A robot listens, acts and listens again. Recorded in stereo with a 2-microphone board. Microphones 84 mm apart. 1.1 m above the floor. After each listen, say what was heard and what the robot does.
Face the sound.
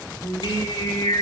Turn 90° left.
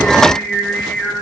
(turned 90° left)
So it is at 10° left. Turn 10° left.
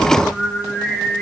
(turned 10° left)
Facing the singing.